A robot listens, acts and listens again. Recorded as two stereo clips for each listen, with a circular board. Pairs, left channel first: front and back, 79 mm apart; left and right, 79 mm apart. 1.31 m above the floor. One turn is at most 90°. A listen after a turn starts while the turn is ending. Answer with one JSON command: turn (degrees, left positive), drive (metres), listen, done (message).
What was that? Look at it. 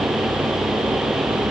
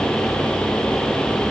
{"listen": true}
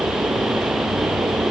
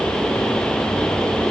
{"listen": true}
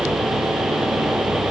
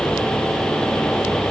{"done": "I can't make out anything."}